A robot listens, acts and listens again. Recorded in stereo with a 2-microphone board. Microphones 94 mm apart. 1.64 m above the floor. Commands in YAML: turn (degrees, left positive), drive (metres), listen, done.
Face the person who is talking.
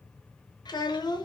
turn: 45
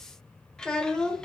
turn: 10
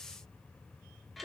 done: "Facing the child speaking."